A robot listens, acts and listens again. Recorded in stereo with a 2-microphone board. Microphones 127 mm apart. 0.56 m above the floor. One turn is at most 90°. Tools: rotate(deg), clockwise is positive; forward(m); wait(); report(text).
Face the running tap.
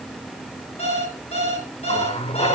rotate(-50)
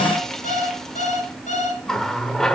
report("Facing the running tap, 1 to 2 m away.")